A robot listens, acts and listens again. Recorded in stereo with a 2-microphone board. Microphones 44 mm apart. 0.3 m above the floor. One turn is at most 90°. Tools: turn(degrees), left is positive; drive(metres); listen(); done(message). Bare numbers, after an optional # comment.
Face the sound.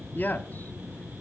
# The man speaking: about 45° left or 135° left.
turn(45)
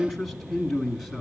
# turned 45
done("Facing the man speaking.")